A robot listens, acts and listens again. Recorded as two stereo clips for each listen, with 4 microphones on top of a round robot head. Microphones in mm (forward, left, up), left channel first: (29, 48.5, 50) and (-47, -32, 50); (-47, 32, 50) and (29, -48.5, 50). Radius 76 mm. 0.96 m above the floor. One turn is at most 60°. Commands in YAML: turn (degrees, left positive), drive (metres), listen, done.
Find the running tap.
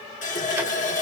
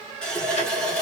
turn: 50
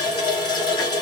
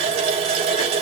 done: "Found it: a running tap, straight ahead, 1 to 2 m away."